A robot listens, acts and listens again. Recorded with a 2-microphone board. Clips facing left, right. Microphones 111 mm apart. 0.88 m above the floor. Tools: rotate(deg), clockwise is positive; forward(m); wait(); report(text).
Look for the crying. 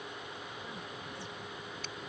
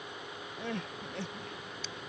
rotate(90)
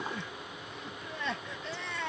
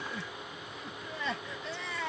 report("Facing the crying.")